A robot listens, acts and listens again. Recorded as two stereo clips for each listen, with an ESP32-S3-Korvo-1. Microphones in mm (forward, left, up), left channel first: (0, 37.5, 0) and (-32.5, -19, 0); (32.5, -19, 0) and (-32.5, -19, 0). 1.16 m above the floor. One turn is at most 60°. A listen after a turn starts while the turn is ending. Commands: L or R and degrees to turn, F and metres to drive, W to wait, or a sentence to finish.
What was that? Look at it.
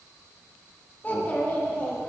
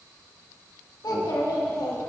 Facing the child speaking, 1 to 2 m away.